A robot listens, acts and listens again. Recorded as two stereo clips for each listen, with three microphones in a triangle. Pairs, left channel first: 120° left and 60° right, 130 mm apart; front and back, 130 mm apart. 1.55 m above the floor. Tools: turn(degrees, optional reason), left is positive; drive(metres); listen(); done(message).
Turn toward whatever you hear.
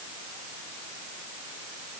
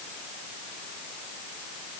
listen()
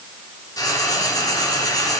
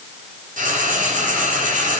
turn(degrees=180, reason="The frying: straight behind.")
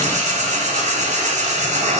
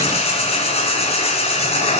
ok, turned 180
turn(degrees=-35, reason="The frying is now 35° right.")
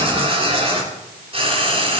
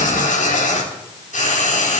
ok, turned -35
turn(degrees=-15, reason="The frying is now 15° right.")
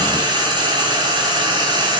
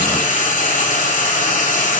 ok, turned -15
done("Facing the frying, 2 to 4 m away.")